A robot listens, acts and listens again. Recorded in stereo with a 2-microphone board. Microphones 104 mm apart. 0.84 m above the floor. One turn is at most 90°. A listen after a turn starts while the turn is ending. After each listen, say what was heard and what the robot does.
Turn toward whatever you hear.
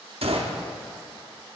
The gunshot: about 65° right or 115° right. Turn 65° right.
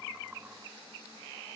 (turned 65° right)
Keep listening.
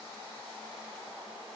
I heard a gunshot, but can't make it out now. It was about straight ahead or 50° right.